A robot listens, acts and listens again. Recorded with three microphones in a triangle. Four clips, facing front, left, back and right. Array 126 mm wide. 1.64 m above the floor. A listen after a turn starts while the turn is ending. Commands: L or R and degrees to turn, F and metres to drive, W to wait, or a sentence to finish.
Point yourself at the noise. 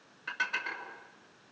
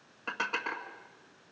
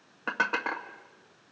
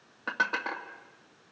R155
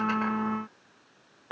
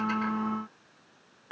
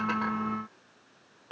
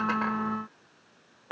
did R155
R55
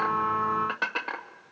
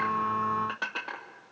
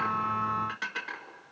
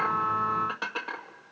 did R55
Facing the dishes clattering, 1 to 2 m away.